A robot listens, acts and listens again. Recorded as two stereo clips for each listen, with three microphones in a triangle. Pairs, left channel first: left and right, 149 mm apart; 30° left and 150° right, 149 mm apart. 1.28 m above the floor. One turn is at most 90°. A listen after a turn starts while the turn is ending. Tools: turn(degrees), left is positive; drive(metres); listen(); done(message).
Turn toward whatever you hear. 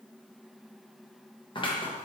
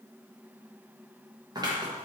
turn(degrees=90)
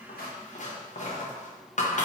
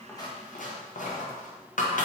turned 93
turn(degrees=55)
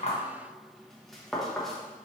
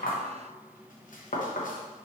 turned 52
done("Facing the scissors, under 1 m away.")